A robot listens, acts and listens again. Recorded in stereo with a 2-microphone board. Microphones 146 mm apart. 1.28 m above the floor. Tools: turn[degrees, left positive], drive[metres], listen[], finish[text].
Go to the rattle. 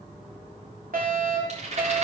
Thought: The rattle: about 50° right or 130° right.
Action: turn[-50]
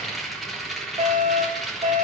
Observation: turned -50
Action: drive[1.0]
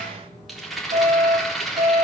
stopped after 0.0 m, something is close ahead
Action: finish[Something is in my way. I am facing the rattle but have not reached it.]